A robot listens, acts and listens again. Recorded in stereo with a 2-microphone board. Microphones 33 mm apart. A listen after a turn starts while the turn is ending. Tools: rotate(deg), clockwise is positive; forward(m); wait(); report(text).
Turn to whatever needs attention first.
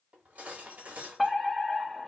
rotate(30)
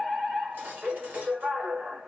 rotate(145)
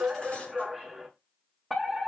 report("Found it: a fire alarm, straight ahead, 1 to 2 m away.")